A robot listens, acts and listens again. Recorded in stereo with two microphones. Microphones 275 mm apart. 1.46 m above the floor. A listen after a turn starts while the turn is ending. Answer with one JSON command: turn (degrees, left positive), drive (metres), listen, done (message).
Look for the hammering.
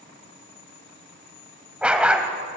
{"listen": true}
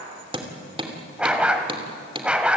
{"turn": -20}
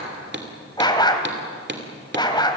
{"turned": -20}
{"turn": -140}
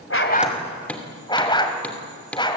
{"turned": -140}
{"done": "Facing the hammering."}